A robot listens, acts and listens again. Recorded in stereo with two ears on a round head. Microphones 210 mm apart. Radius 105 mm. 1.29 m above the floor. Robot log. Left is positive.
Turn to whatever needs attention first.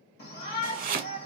note: The shout: about 45° left or 135° left.
cmd yaw +45
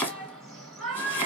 end: Facing the shout.